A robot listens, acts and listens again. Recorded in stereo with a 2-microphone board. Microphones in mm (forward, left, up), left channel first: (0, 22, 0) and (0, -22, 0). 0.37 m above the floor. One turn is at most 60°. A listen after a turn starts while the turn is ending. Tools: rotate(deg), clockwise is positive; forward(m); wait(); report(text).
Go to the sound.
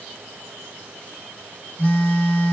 rotate(-40)
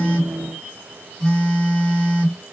forward(1.0)
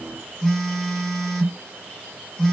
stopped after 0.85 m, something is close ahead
rotate(-10)
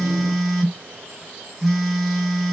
report("I am next to the phone buzzing.")